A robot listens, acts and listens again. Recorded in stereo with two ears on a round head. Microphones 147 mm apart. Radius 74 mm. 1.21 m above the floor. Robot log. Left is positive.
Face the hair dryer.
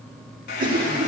note: The hair dryer: about 60° left or 120° left.
cmd yaw +60
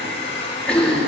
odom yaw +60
note: So it is at 40° left.
cmd yaw +40
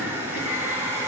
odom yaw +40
note: The hair dryer is now 15° right.
cmd yaw -15
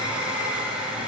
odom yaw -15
end: Found it: a hair dryer, straight ahead.